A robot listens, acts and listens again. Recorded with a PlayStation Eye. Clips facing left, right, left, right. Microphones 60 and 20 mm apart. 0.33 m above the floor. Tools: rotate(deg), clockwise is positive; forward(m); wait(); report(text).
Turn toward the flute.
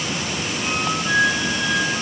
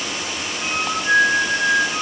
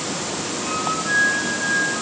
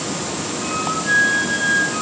rotate(35)
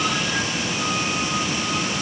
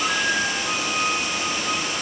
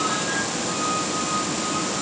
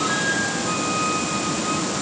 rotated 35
wait()
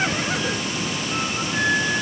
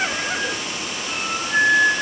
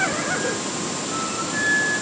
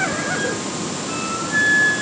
rotate(105)
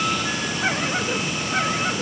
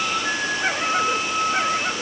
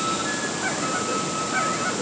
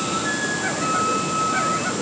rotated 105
rotate(45)
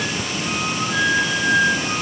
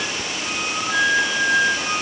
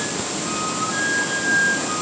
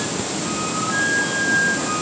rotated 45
rotate(10)
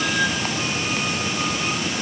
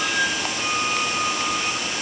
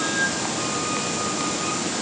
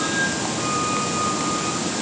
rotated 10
wait()
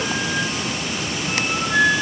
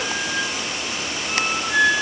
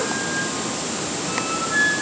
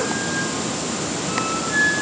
report("Found it: a flute, straight ahead.")